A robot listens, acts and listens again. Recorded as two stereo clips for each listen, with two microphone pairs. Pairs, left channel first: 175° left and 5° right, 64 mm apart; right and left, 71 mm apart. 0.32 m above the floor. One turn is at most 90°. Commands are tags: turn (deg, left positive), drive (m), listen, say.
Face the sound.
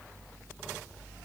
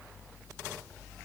<listen/>
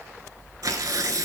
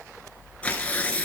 <turn deg="-20"/>
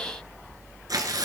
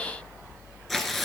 <say>Facing the tearing paper.</say>